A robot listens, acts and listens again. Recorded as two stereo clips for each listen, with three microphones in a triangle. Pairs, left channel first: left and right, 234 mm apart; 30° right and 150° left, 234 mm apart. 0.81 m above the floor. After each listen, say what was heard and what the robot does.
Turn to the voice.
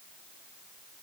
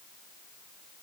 Keep listening.
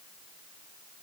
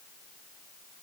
Keep listening.
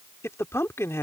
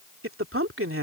The man speaking: 170° left. Turn 170° left.
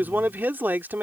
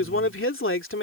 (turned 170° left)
The man speaking is now 10° right. Turn 10° right.
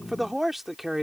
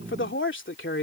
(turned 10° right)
Found it: a man speaking, straight ahead.